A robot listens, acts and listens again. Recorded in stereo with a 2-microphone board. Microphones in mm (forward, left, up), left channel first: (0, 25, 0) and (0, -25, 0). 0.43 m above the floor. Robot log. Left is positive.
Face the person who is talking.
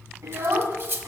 cmd yaw -90
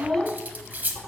note: So it is at 10° left.
cmd yaw +10
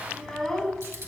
note: The child speaking is now 10° left.
cmd yaw +10
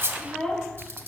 note: The child speaking is now 10° left.
cmd yaw +10
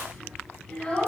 note: The child speaking is now 15° left.
cmd yaw +15
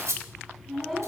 end: Facing the child speaking, 2 to 4 m away.